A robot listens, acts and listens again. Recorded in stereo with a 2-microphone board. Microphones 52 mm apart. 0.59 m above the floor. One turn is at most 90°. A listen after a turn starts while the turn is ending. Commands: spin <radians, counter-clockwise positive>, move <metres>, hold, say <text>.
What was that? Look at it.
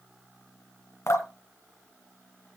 spin 1.22
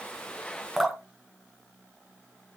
say Found it: dripping, straight ahead, 1 to 2 m away.